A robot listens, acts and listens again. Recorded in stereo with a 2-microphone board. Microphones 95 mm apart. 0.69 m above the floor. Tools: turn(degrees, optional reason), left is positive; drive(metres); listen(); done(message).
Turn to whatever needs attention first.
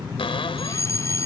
turn(degrees=30, reason="The fire alarm: about 30° left or 150° left.")
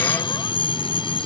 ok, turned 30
turn(degrees=115, reason="So it is at 115° left.")
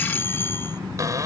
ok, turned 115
turn(degrees=25, reason="The fire alarm is now 25° left.")
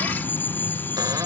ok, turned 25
turn(degrees=20, reason="The fire alarm is now 20° left.")
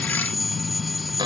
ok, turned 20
done("Facing the fire alarm.")